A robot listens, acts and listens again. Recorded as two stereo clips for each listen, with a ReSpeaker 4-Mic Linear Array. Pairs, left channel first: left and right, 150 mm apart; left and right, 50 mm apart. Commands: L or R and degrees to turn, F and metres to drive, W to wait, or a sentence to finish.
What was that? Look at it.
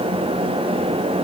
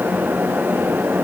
W
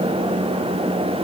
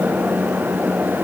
W
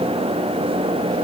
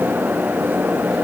I can't make out anything to turn to.